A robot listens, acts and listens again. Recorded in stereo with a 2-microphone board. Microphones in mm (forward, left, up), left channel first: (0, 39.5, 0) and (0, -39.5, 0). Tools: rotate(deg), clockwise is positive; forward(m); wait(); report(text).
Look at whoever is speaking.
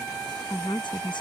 rotate(-90)
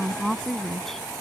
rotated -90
report("Facing the woman speaking.")